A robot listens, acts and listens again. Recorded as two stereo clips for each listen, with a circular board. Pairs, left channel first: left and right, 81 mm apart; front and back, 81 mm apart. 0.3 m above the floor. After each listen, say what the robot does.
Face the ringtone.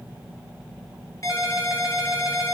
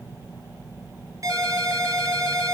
Turn 135° left.
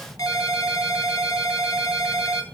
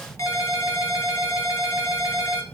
Turn 50° left.
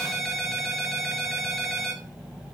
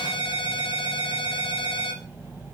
Facing the ringtone.